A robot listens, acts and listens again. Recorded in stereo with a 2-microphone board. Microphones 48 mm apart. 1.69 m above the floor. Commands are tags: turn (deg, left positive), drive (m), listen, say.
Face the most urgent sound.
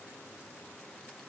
<listen/>
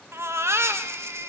<turn deg="-60"/>
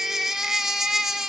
<say>Facing the baby crying.</say>